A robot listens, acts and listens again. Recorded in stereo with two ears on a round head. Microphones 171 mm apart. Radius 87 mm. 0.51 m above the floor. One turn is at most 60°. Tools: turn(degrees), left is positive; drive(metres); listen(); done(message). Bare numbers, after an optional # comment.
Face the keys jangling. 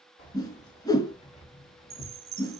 # The keys jangling: about 30° left or 150° left.
turn(30)
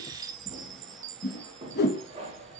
# So it is at 35° right.
turn(-35)
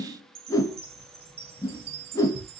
# The keys jangling is now 25° right.
turn(-25)
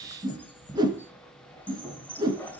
# The keys jangling is now 10° left.
turn(10)
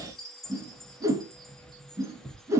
done("Found it: keys jangling, straight ahead, 1 to 2 m away.")